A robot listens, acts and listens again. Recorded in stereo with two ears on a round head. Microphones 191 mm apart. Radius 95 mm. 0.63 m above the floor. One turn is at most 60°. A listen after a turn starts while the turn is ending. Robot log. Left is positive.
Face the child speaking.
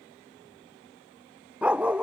cmd idle
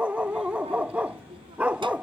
note: The child speaking: about 25° right or 155° right.
cmd yaw -25
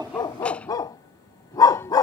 cmd idle
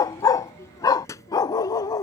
note: So it is at 15° left.
cmd yaw +15
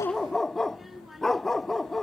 end: Found it: a child speaking, straight ahead.